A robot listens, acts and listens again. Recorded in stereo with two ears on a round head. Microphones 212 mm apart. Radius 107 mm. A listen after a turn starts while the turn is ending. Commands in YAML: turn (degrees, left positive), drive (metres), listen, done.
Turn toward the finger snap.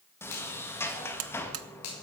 turn: 90
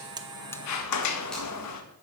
listen: true
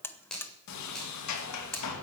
done: "Found it: a finger snap, straight ahead, over 4 m away."